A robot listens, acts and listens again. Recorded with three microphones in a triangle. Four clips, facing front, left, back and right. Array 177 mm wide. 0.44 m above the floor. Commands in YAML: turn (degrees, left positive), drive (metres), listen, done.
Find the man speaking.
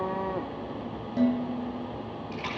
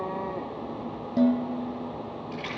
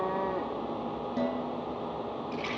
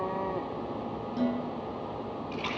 listen: true
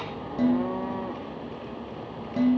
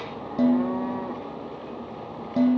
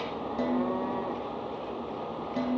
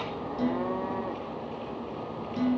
listen: true
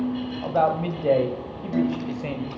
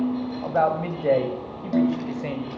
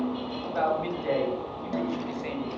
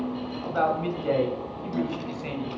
turn: 50
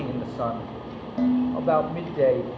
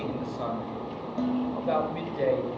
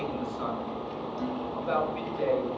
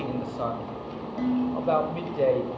turn: -15
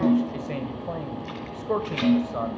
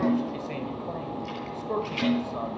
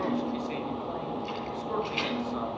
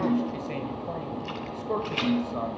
done: "Facing the man speaking."